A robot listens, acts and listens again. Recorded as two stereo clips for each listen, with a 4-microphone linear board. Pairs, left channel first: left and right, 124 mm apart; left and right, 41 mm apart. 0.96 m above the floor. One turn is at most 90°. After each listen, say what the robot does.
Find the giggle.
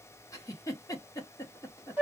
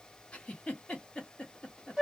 Turn 25° left.
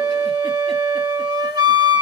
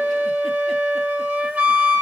Keep listening.
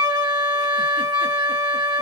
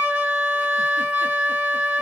Keep listening.
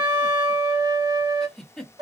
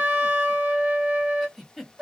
Found it: a giggle, straight ahead.